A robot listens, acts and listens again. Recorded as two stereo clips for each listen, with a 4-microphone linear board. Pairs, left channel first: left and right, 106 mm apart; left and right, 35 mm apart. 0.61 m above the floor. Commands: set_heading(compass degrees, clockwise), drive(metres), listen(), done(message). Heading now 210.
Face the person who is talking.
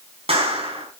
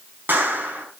listen()
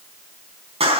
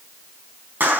listen()
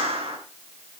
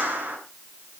done("I can't make out anyone speaking, only a clap.")